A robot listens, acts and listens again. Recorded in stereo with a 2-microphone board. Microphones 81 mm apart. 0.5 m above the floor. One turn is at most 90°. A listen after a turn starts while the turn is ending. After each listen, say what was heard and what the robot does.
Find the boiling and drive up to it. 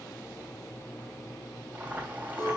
The boiling: about 20° right or 160° right. Turn 20° right.
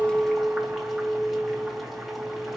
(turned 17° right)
Keep listening.
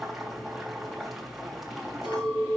Drive 1.0 m forward.
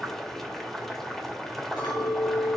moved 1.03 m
Drive 1.0 m forward.
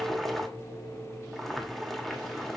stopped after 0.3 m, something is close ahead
I am next to the boiling.